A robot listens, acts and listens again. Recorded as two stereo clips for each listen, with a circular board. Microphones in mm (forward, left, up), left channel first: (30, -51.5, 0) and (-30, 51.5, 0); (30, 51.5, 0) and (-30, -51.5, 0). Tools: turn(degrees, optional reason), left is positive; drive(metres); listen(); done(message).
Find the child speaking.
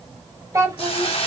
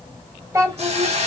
turn(degrees=180, reason="The child speaking: straight behind.")
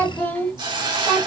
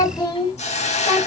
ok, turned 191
turn(degrees=25, reason="The child speaking is now 25° left.")
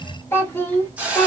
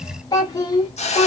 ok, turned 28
turn(degrees=15, reason="The child speaking is now 15° left.")
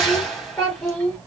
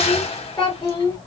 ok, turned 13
turn(degrees=10, reason="The child speaking is now 10° left.")
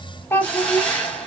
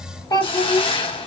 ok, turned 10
done("Found it: a child speaking, straight ahead, 2 to 4 m away.")